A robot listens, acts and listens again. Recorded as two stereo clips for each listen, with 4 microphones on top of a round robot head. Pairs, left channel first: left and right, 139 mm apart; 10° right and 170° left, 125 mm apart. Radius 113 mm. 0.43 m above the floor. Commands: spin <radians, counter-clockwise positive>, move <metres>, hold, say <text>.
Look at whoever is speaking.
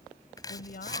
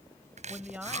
spin 1.57
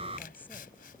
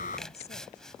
spin 0.17
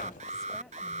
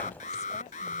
hold
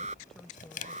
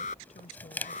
say Found it: a woman speaking, straight ahead.